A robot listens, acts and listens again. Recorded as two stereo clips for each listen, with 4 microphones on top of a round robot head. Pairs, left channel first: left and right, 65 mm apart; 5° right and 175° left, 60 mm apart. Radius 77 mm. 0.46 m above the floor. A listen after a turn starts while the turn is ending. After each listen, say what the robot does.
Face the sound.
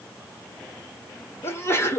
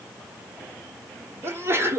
Turn 135° left.
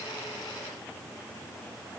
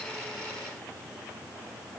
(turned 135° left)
Facing where the sneeze came from. I can't hear it now.